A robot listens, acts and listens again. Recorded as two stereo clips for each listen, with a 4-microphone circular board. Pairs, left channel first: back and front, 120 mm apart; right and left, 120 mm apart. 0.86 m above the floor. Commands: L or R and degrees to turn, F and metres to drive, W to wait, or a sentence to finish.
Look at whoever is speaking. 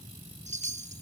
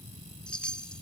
W
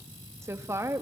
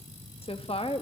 R65
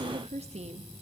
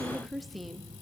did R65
Found it: a woman speaking, straight ahead, 1 to 2 m away.